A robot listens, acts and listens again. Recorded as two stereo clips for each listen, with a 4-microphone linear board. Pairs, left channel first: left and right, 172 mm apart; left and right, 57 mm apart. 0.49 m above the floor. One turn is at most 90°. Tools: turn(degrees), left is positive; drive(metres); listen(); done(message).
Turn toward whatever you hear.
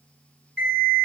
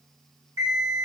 turn(degrees=-65)
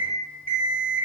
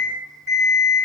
turn(degrees=-45)
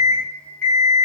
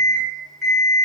turn(degrees=10)
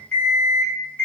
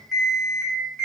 done("Found it: an alarm clock, straight ahead.")